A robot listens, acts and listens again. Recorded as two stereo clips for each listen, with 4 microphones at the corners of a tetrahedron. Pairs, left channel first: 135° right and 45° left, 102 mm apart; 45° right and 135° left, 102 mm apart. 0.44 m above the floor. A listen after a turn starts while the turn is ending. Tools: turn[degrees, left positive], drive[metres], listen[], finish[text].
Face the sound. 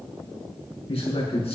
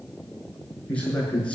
Thought: The man speaking: 125° right.
Action: turn[-125]
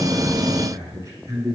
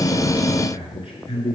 Thought: The man speaking is now 15° right.
Action: turn[-15]
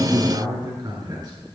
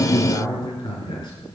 Action: finish[Facing the man speaking.]